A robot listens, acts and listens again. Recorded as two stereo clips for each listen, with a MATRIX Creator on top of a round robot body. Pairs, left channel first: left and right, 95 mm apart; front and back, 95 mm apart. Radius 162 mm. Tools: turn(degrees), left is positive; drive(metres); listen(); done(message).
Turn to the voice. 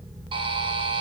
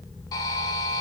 listen()
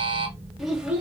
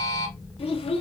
turn(degrees=-10)
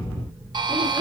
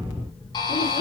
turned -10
turn(degrees=-15)
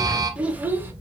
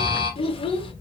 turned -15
turn(degrees=-20)
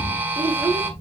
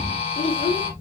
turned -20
turn(degrees=-25)
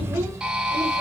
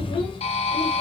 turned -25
listen()
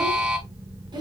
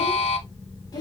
turn(degrees=-50)
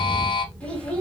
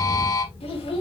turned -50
turn(degrees=10)
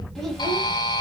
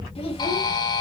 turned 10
done("Facing the child speaking, 1 to 2 m away.")